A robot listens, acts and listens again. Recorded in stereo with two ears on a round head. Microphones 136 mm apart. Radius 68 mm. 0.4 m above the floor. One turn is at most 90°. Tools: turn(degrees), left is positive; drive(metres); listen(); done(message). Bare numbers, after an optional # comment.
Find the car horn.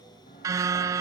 # The car horn: about 20° right or 160° right.
turn(-20)
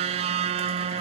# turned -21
# So it is at 135° right.
turn(-90)
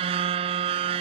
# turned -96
# The car horn is now 40° right.
turn(-40)
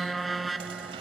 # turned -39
done("Found it: a car horn, straight ahead.")